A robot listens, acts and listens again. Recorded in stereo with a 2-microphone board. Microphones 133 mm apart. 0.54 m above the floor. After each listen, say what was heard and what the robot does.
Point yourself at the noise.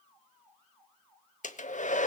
The hair dryer: about 70° left or 110° left. Turn 70° left.
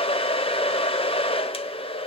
So it is at 45° left. Turn 45° left.
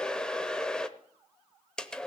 Facing the hair dryer, under 1 m away.